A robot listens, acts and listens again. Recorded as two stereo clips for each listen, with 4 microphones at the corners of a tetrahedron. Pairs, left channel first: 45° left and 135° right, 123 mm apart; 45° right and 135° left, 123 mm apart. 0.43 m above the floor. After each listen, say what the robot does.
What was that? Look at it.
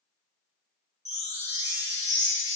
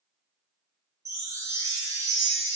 Turn 75° left.
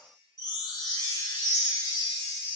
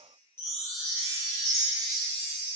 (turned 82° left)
Turn 10° right.
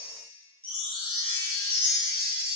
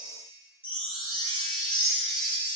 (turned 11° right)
Facing the chime.